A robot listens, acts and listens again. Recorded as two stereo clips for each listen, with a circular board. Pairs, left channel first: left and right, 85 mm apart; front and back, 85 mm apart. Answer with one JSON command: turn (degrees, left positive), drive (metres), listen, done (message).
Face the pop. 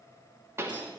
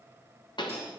{"turn": -30}
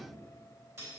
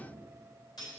{"done": "I heard a pop from this way, but can't make it out now."}